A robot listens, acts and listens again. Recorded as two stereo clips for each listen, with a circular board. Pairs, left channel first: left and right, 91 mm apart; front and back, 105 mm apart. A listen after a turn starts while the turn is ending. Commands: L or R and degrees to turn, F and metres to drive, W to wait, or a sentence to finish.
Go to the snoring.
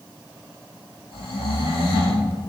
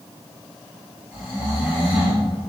L100
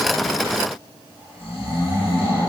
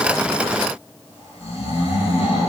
R25
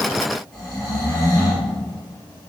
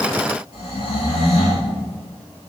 F1.0
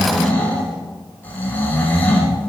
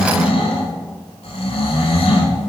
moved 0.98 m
L20
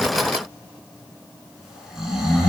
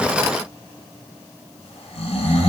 F1.0
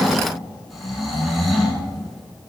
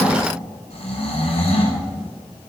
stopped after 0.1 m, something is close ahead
Arrived at the snoring, straight ahead.